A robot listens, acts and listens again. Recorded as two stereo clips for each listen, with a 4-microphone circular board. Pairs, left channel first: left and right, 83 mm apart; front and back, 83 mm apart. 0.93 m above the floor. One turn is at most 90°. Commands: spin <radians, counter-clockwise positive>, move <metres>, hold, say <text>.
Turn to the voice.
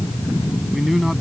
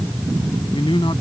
say Found it: a man speaking, straight ahead.